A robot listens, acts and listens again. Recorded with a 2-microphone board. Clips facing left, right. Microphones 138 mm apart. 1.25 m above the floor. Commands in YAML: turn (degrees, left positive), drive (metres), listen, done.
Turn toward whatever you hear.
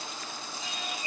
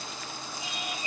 turn: -20
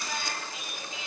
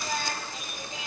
turn: -135
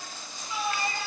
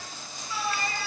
turn: 20
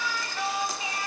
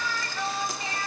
turn: 15
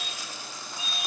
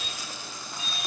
done: "Facing the singing."